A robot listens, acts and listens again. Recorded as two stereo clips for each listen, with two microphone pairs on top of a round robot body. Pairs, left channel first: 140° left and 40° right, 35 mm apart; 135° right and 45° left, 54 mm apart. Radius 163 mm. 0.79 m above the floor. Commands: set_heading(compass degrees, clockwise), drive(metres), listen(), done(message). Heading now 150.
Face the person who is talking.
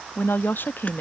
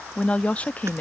set_heading(345)
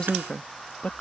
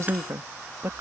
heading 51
set_heading(326)
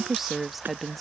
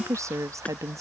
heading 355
set_heading(305)
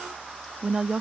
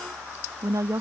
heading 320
set_heading(295)
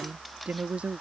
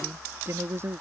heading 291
set_heading(281)
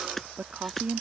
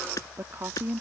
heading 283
set_heading(273)
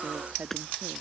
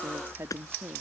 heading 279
done("Found it: a woman speaking, straight ahead.")